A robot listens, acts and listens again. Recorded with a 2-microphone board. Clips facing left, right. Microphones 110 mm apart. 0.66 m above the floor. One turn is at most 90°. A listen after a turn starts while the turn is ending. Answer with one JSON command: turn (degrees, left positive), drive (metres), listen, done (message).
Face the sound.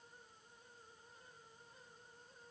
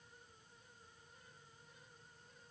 {"listen": true}
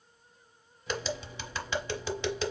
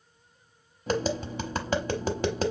{"turn": -45}
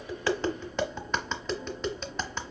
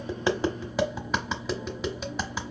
{"done": "Found it: tapping, straight ahead."}